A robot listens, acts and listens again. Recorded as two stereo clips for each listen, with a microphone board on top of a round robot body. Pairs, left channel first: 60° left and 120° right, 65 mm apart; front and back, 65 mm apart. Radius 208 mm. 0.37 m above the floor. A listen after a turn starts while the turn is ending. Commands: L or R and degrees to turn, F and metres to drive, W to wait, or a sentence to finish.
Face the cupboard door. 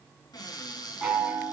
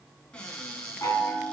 L75
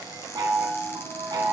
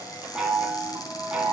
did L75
W
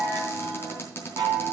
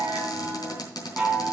Facing the cupboard door.